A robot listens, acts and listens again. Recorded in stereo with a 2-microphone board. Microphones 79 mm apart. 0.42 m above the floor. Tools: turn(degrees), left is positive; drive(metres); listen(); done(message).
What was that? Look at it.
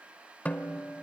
turn(degrees=20)
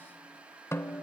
turn(degrees=140)
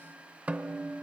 turn(degrees=-20)
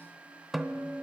done("Found it: a snare drum, straight ahead, under 1 m away.")